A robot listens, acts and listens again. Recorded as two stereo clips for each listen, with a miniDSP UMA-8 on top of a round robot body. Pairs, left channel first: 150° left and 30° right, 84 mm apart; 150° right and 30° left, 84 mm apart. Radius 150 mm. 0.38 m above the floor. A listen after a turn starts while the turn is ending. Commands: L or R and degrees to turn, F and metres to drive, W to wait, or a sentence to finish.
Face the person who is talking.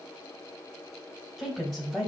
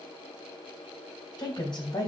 R120
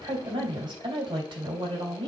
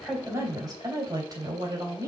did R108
R10
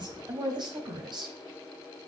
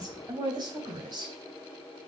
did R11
Facing the woman speaking, 2 to 4 m away.